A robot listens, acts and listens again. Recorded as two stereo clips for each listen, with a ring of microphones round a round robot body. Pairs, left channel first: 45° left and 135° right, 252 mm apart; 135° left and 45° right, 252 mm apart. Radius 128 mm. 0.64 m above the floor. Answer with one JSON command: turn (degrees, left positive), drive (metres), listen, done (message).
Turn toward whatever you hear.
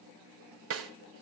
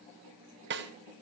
{"turn": -95}
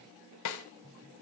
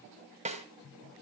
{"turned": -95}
{"turn": 20}
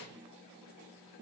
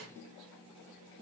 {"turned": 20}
{"listen": true}
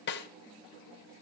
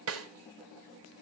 {"done": "Found it: a snare drum, straight ahead."}